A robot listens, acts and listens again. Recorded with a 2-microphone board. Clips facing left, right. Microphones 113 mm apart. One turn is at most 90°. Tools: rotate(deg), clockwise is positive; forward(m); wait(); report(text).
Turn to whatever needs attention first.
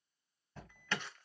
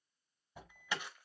rotate(30)
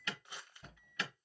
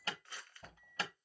rotate(90)
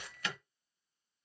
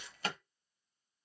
rotate(50)
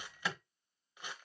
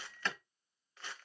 rotate(-10)
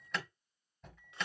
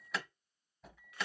report("Found it: an alarm, straight ahead.")